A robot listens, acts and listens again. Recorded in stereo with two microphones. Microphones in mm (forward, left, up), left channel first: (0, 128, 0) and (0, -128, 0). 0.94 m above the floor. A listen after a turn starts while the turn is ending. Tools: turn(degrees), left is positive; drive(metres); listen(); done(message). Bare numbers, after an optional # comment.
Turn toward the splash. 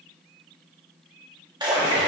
# The splash: about 15° right or 165° right.
turn(-15)
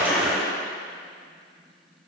done("Found it: a splash, straight ahead, 1 to 2 m away.")